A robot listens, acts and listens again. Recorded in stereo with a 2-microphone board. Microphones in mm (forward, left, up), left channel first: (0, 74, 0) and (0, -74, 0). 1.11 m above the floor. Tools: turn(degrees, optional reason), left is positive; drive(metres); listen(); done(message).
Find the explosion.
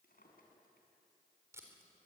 listen()
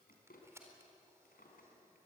listen()
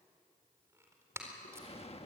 turn(degrees=45, reason="The explosion: about 45° left or 135° left.")
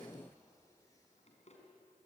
listen()
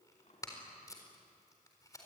done("I heard an explosion, but can't make it out now. It was about straight ahead or 90° left.")